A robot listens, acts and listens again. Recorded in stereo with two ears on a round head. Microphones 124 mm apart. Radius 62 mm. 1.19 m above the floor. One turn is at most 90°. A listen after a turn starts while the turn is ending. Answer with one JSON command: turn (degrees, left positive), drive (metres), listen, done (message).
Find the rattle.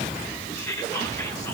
{"listen": true}
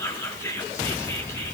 {"listen": true}
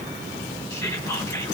{"done": "I can't make out a rattle, only whispering."}